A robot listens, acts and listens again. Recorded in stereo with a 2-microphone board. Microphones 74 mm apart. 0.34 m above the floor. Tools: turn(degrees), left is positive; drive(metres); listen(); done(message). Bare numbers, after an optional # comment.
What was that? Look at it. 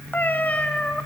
turn(30)
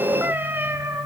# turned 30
# So it is at 35° right.
turn(-35)
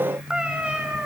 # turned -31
# The cat meowing is now 15° right.
turn(-15)
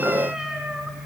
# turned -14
listen()
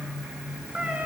# The cat meowing is now 15° right.
turn(-15)
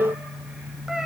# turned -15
listen()
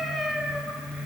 done("Facing the cat meowing.")